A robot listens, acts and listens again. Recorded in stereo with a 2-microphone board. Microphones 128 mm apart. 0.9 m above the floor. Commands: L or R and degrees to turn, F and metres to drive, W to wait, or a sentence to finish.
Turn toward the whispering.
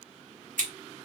W
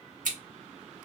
W
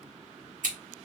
I can't make out whispering to turn to.